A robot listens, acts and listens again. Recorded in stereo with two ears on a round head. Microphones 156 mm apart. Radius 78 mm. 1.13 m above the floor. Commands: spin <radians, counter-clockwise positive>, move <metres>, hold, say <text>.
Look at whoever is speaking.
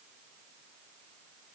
hold
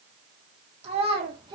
spin -0.44
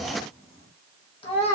spin 0.70
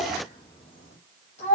spin 0.70
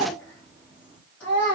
spin 0.17
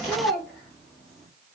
say Facing the child speaking.